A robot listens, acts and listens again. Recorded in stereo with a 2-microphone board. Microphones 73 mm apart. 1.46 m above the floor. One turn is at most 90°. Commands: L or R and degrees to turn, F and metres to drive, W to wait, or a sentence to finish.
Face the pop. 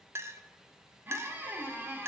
W
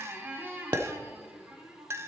R90
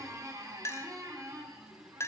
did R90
I heard a pop from this way, but can't make it out now.